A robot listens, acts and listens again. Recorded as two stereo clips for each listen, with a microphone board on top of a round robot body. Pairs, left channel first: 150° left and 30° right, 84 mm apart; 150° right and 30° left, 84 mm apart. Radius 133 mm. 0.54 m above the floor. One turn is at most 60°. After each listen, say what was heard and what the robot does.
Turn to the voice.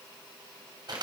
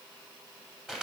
Keep listening.
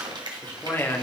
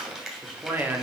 The man speaking: 90° left. Turn 60° left.
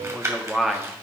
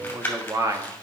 The man speaking is now 55° left. Turn 55° left.
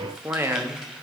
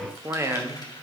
Found it: a man speaking, straight ahead, 1 to 2 m away.